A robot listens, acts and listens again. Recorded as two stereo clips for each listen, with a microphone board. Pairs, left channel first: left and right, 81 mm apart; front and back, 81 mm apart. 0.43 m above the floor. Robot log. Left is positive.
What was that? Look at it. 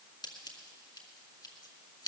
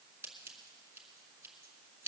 note: The scissors: 120° left.
cmd yaw +120
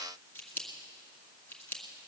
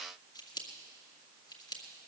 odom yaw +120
note: The scissors is now 25° left.
cmd yaw +25
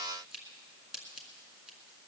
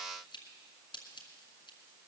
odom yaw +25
end: Found it: scissors, straight ahead.